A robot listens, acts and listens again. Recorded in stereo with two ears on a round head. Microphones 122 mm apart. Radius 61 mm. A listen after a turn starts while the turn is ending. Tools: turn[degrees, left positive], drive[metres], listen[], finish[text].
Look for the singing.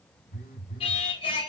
Thought: The singing: about 40° left or 140° left.
Action: turn[40]
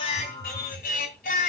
Thought: So it is at 115° left.
Action: turn[115]
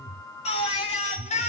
Thought: The singing is now 50° left.
Action: turn[50]
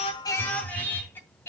Thought: The singing is now 20° left.
Action: turn[20]
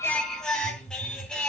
Action: finish[Facing the singing, 2 to 4 m away.]